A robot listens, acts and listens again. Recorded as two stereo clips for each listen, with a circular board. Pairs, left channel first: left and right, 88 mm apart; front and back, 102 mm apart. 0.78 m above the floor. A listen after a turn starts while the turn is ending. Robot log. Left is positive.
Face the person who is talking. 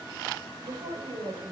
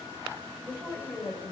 note: The woman speaking: 110° right.
cmd yaw -110
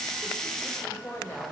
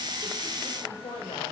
note: The woman speaking is now 25° left.
cmd yaw +25
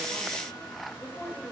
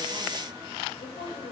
note: The woman speaking is now 15° left.
cmd yaw +15
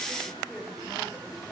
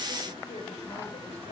end: Found it: a woman speaking, straight ahead, 2 to 4 m away.